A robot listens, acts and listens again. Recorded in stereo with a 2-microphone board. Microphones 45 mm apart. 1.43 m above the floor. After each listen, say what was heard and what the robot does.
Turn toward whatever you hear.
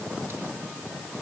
Keep listening.
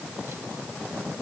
Keep listening.
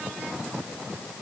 I can't make out anything to turn to.